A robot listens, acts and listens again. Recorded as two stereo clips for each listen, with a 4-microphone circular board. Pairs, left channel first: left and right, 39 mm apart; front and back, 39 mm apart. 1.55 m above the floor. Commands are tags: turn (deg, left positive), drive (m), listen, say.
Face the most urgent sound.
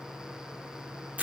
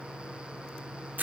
<listen/>
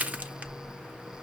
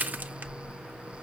<listen/>
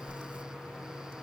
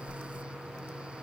<say>I can't make out anything urgent to turn to.</say>